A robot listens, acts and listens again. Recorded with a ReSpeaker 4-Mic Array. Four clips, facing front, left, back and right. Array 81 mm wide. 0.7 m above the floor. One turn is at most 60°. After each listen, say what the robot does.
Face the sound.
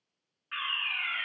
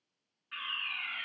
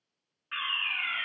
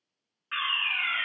Turn 60° right.
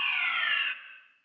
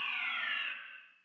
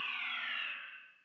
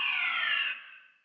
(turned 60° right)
Turn 30° right.
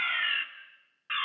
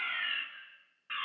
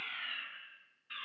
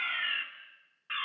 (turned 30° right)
Turn 10° right.
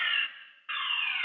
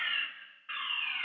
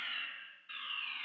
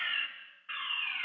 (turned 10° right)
Found it: a fire alarm, straight ahead, 2 to 4 m away.